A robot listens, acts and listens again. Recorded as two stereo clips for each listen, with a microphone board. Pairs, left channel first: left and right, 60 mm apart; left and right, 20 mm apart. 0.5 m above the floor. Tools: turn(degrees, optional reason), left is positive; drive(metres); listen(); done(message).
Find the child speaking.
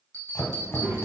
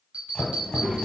turn(degrees=-60, reason="The child speaking: about 60° right or 120° right.")
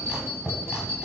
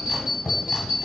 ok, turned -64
listen()
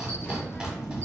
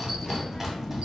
turn(degrees=30, reason="So it is at 30° left.")
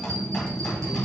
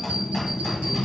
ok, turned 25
turn(degrees=30, reason="The child speaking is now 30° left.")
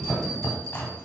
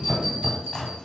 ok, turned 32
turn(degrees=10, reason="The child speaking is now 10° left.")
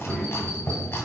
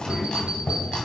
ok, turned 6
turn(degrees=20, reason="The child speaking is now 20° left.")
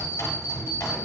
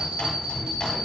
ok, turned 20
listen()
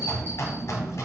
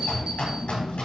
done("Found it: a child speaking, straight ahead.")